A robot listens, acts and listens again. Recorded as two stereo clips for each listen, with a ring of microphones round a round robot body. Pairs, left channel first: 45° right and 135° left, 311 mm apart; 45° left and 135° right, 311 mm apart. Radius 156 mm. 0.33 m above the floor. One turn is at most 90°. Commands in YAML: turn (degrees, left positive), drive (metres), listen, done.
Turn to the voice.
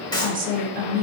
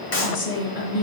turn: 70
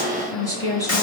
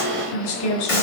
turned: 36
turn: 35
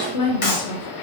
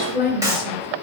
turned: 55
turn: -20
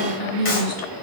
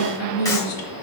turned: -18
done: "Facing the woman speaking, over 4 m away."